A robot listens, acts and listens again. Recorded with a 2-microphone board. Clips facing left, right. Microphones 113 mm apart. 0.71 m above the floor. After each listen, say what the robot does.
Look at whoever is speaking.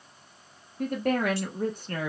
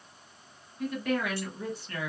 Turn 45° left.
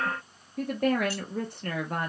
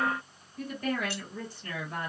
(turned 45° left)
Turn 80° left.
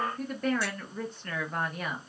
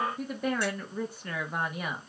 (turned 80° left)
Turn 10° right.
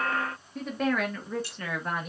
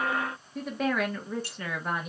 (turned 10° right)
Facing the woman speaking, under 1 m away.